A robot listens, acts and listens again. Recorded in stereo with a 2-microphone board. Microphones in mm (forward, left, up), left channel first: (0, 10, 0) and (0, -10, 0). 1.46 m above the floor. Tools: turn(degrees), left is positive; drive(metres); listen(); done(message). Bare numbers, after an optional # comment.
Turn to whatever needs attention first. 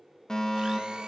# The fire alarm: about 30° left or 150° left.
turn(30)
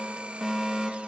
done("Found it: a fire alarm, straight ahead, over 4 m away.")